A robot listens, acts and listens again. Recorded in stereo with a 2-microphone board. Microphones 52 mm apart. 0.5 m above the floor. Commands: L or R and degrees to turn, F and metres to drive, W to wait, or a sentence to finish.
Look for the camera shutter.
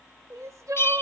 W
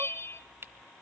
R50
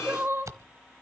R80
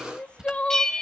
R15
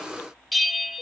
W
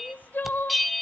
W
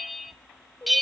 I heard a camera shutter from this way, but can't make it out now.